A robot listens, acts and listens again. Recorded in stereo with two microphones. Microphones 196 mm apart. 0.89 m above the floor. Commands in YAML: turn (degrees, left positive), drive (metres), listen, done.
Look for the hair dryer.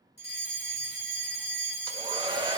turn: -25
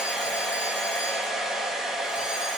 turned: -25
done: "Facing the hair dryer, 1 to 2 m away."